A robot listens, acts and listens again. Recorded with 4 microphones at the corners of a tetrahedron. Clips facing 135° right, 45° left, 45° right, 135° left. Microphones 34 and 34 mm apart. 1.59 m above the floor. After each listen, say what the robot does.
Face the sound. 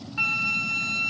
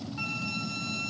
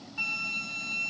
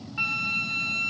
Turn 170° right.
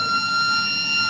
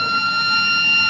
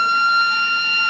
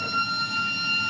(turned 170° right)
Turn 15° right.
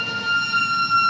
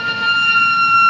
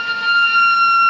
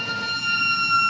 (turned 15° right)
Facing the flute.